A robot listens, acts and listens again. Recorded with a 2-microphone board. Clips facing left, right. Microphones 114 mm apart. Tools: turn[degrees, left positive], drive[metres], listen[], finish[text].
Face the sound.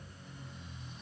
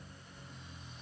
Action: listen[]
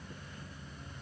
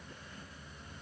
Action: listen[]
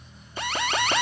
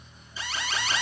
Thought: The alarm: about 55° left or 125° left.
Action: turn[55]
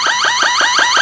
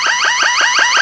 Thought: So it is at 10° left.
Action: turn[10]
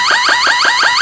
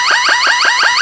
Action: finish[Found it: an alarm, straight ahead, 1 to 2 m away.]